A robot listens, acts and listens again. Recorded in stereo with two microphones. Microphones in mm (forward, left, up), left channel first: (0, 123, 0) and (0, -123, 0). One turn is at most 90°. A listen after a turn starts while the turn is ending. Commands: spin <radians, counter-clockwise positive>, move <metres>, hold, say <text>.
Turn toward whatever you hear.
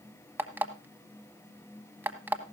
spin -0.52
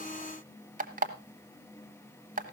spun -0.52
spin -1.57
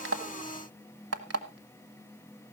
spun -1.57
spin -1.48
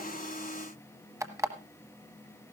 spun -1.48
spin -0.26
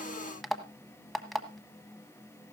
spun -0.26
say Found it: an alarm clock, straight ahead.